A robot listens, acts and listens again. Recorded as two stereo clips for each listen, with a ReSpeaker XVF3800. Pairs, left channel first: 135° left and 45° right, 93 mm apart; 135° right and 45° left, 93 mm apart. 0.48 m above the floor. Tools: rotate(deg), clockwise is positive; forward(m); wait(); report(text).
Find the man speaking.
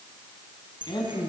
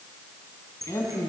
rotate(-165)
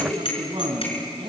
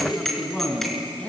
rotate(60)
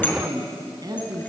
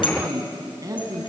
report("Facing the man speaking, over 4 m away.")